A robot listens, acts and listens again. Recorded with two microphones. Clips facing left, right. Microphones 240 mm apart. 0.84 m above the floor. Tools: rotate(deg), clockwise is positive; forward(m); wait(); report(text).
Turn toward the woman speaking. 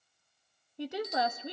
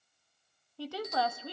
rotate(-20)
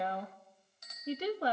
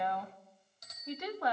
rotate(-140)
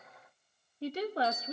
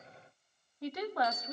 rotate(-40)
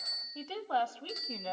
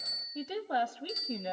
rotate(20)
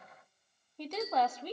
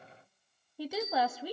rotate(10)
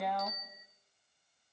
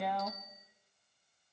report("Facing the woman speaking.")